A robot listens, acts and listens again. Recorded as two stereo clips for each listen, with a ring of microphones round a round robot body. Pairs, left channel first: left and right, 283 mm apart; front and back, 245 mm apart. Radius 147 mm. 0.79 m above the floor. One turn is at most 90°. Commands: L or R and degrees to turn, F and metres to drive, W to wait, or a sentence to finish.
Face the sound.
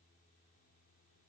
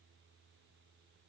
W
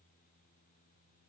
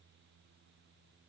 W
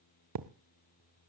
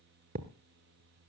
R90
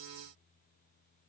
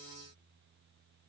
R30
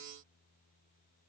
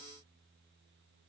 I heard a thud from this way, but can't make it out now.